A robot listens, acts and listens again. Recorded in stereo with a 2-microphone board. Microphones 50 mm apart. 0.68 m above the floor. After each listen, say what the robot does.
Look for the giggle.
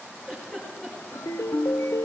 Turn 20° left.
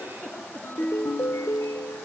Turn 140° left.
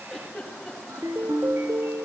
Facing the giggle.